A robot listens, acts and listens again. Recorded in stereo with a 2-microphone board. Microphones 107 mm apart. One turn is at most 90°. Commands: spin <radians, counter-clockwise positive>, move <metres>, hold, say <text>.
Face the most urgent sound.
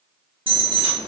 spin -0.87
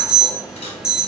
spin -0.17
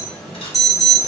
say Found it: an alarm, straight ahead.